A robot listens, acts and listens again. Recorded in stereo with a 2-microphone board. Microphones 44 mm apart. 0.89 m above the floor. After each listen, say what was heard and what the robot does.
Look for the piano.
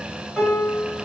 Turn 30° right.
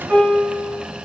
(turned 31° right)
So it is at 140° right. Turn 140° right.
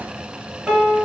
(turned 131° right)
Found it: a piano, straight ahead, 1 to 2 m away.